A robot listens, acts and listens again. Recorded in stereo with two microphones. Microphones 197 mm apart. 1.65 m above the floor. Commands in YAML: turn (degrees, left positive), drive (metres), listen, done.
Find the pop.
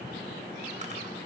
listen: true
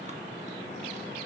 listen: true
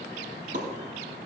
turn: -60
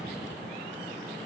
listen: true
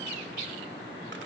done: "I heard a pop, but can't make it out now. It was about straight ahead or 60° right."